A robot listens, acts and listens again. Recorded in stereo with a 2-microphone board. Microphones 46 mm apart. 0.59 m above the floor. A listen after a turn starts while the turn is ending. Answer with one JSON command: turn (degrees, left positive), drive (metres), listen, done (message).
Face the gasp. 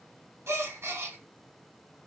{"turn": -75}
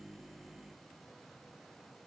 {"listen": true}
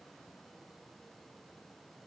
{"done": "I heard a gasp, but can't make it out now. It was about straight ahead or 30° right."}